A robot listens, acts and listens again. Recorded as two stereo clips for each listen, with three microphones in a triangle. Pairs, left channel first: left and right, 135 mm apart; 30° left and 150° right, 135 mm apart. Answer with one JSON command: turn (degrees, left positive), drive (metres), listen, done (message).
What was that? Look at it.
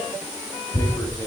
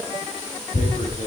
{"turn": 30}
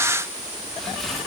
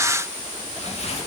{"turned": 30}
{"done": "Facing the tearing paper, 1 to 2 m away."}